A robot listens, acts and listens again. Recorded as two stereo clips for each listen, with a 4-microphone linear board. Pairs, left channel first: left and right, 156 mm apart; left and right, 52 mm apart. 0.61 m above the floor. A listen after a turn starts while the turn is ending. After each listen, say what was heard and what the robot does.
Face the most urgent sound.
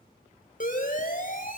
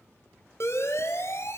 The siren: about 60° left or 120° left. Turn 60° left.
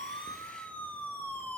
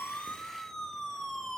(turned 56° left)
So it is at 10° left. Turn 10° left.
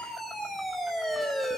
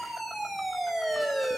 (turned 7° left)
Facing the siren.